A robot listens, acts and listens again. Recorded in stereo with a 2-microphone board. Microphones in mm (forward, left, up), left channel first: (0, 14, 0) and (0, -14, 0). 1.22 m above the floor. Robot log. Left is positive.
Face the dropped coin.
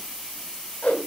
cmd idle
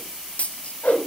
note: The dropped coin: about 55° left or 125° left.
cmd yaw +55
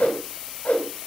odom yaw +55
cmd idle
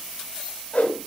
end: I heard a dropped coin, but can't make it out now. It was about straight ahead or 70° left.